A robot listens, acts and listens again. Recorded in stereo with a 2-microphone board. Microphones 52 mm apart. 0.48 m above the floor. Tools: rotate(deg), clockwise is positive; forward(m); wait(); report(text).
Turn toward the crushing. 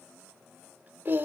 wait()
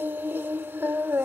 wait()
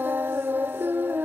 report("I can't make out crushing, only singing.")